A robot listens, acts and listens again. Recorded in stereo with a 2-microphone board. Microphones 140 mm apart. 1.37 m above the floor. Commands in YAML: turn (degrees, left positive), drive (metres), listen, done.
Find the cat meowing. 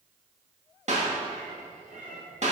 turn: -70
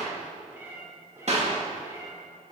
turn: -30
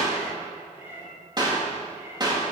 turn: -20
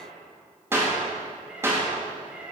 turn: -10
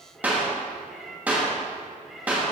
done: "Found it: a cat meowing, straight ahead, 2 to 4 m away."